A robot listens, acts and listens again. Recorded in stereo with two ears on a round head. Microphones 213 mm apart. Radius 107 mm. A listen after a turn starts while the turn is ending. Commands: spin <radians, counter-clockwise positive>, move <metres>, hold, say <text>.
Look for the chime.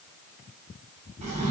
hold
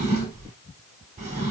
hold
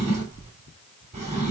say I can't make out a chime to turn to.